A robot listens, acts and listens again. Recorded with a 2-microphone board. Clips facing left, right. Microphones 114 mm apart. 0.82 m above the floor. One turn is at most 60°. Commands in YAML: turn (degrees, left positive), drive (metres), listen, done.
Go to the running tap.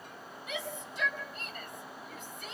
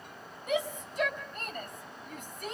listen: true
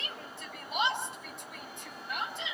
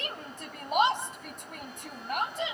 listen: true
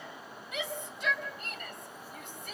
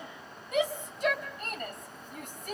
done: "I can't make out a running tap to turn to."